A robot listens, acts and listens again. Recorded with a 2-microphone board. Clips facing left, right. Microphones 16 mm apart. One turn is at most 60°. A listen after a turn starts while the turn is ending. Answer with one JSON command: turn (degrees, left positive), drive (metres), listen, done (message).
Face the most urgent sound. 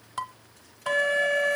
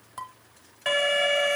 {"turn": -40}
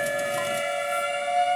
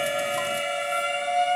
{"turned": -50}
{"done": "Found it: an alarm, straight ahead, 1 to 2 m away."}